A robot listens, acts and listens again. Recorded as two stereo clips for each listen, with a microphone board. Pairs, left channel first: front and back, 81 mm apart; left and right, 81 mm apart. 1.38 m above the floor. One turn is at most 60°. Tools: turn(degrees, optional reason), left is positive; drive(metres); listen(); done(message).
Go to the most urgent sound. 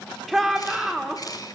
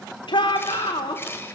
turn(degrees=60, reason="The shout: 90° left.")
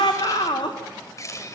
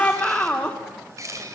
turn(degrees=10, reason="The shout is now 10° left.")
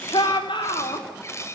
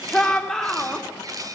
drive(metres=1.0)
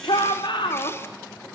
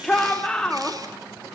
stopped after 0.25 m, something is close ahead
done("Blocked. The shout is further on, straight ahead.")